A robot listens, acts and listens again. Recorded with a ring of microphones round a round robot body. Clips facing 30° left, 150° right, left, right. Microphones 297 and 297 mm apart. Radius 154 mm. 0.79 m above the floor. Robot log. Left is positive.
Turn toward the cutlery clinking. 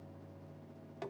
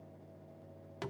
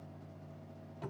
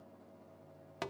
cmd idle
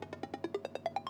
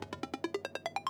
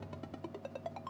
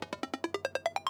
cmd idle
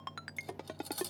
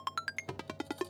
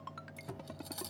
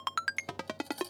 note: The cutlery clinking: 20° left.
cmd yaw +20
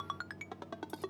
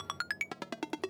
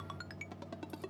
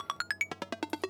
cmd idle
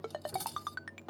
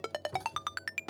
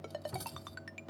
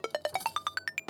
end: Found it: cutlery clinking, straight ahead.